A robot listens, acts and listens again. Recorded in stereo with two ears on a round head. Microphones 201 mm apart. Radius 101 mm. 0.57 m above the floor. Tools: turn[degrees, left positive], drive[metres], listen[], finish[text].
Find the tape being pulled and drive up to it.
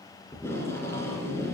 Action: turn[30]
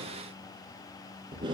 Thought: So it is at 20° right.
Action: turn[-20]
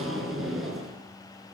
Action: drive[1.0]
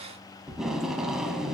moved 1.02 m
Action: drive[1.0]
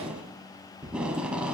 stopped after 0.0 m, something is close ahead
Action: finish[I am next to the tape being pulled.]